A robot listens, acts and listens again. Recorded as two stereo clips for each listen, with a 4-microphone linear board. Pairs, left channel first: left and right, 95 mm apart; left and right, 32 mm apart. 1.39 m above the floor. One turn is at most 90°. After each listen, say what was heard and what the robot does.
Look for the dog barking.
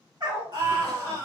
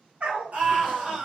The dog barking: about 50° right or 130° right. Turn 50° right.
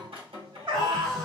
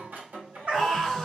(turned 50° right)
So it is at 65° right. Turn 65° right.
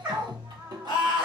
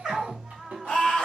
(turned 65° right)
The dog barking is now 20° right. Turn 20° right.
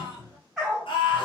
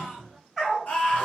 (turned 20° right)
Facing the dog barking, 1 to 2 m away.